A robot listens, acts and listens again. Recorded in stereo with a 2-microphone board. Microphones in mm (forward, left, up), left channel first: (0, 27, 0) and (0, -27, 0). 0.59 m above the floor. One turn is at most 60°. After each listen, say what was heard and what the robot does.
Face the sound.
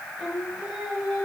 Turn 30° left.
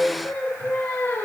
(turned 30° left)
So it is at 135° left. Turn 60° left.
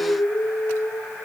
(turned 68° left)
The singing is now 30° left. Turn 30° left.
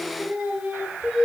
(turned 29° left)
The singing is now 25° right. Turn 25° right.
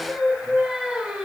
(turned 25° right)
The singing is now 10° right. Turn 10° right.
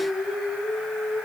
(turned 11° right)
Facing the singing, 1 to 2 m away.